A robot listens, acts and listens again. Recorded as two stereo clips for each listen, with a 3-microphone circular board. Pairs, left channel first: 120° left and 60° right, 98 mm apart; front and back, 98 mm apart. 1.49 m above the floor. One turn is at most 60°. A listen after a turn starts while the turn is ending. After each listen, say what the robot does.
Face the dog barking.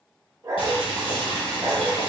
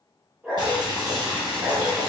Turn 60° right.
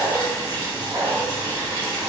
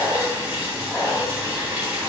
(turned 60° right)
Turn 60° right.
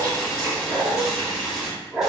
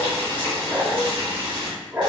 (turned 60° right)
Turn 60° right.
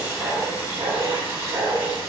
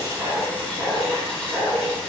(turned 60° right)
Turn 60° right.
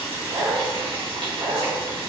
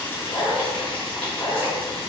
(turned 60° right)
Turn 35° right.
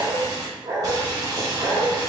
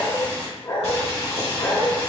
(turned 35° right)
Turn 10° right.
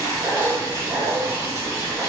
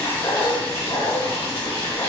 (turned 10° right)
Found it: a dog barking, straight ahead.